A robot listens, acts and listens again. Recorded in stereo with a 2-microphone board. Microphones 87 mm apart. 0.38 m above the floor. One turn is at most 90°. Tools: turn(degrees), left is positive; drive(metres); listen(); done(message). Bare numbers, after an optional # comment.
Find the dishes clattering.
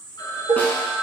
# The dishes clattering: about 45° right or 135° right.
turn(-45)
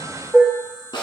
# So it is at 10° right.
turn(-10)
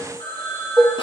done("Found it: dishes clattering, straight ahead.")